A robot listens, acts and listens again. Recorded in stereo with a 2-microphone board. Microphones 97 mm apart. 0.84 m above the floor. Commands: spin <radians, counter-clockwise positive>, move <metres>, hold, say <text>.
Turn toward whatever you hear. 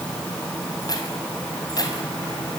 spin 0.70
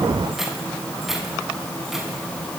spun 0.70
say Found it: keys jangling, straight ahead.